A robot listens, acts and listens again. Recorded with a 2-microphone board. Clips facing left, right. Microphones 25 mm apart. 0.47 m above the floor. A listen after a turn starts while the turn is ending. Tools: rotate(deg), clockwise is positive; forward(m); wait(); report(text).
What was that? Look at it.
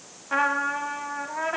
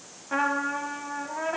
rotate(-20)
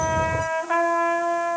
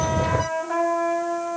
rotate(-140)
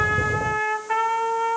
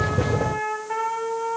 rotate(-40)
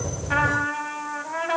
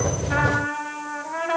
report("Facing the trumpet, under 1 m away.")